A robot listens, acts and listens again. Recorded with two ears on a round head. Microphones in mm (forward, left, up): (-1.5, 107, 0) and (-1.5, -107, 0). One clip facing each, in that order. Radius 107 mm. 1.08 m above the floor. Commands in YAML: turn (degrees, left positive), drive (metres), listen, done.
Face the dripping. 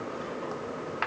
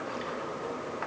listen: true
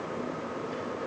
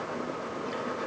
listen: true
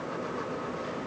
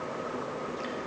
done: "I can't make out dripping to turn to."